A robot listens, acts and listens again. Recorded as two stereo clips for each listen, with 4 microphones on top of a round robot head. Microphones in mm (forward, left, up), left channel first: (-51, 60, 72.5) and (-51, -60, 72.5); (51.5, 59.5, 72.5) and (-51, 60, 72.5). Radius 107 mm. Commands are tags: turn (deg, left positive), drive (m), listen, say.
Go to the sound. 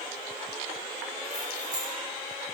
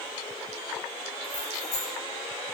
<turn deg="-25"/>
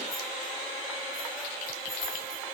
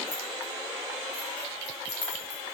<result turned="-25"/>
<drive m="1.0"/>
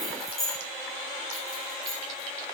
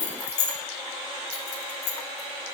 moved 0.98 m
<drive m="1.0"/>
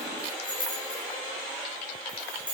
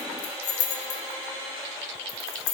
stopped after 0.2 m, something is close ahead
<say>I am next to the keys jangling.</say>